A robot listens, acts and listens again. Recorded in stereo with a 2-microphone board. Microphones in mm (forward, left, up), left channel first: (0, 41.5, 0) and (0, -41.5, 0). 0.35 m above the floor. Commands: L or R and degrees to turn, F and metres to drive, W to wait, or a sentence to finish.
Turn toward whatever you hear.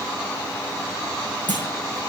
L25
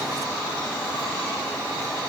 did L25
W
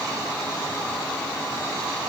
I heard a clunk, but can't make it out now. It was about straight ahead or 130° left.